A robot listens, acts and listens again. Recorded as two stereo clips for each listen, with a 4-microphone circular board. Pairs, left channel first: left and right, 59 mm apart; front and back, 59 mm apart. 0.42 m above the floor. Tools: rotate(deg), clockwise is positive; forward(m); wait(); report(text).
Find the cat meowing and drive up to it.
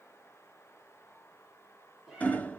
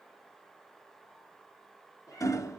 rotate(10)
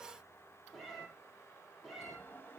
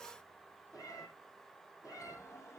forward(1.0)
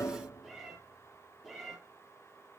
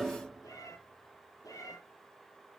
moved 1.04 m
forward(1.0)
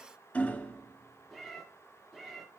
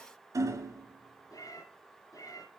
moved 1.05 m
forward(1.0)
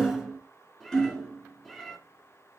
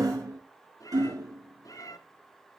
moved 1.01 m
forward(1.0)
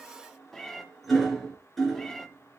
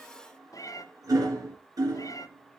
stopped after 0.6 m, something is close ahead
report("I am next to the cat meowing.")